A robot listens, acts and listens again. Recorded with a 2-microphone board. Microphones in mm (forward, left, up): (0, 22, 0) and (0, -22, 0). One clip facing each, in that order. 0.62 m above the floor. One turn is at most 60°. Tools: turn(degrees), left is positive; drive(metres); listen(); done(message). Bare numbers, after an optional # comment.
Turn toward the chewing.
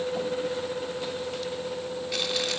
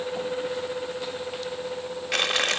# The chewing: about 65° right or 115° right.
turn(-60)
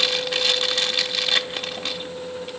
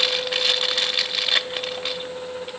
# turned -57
# So it is at 10° right.
turn(-10)
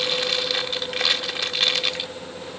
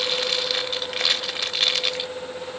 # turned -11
done("Found it: chewing, straight ahead, 1 to 2 m away.")